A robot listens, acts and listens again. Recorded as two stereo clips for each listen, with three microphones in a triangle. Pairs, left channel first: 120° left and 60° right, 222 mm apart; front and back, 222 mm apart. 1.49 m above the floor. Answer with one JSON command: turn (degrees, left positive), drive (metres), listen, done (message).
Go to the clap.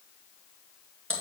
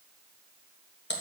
{"listen": true}
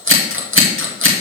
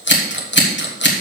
{"listen": true}
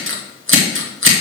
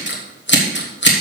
{"done": "I can't make out a clap, only scissors."}